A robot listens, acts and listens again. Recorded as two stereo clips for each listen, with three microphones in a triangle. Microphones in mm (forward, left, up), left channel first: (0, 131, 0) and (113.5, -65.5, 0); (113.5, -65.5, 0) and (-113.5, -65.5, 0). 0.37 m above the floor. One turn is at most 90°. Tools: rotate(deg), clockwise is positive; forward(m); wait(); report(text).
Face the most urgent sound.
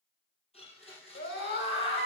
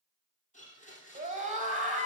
rotate(-90)
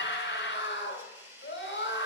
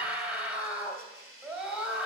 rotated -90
rotate(-90)
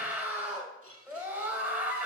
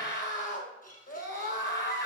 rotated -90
rotate(-20)
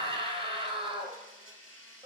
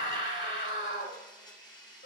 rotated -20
report("Facing the scream, 1 to 2 m away.")